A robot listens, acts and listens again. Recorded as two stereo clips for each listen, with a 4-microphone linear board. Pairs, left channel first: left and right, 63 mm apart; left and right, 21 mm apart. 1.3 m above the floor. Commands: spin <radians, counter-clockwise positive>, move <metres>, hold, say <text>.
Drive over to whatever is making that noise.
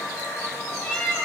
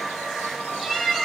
spin 0.35
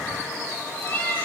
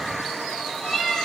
spin 2.53
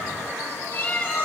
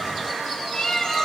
spin 0.70
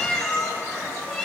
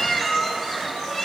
move 1.0
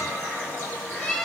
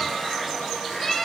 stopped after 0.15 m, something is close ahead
say Blocked. The cat meowing is further on, straight ahead.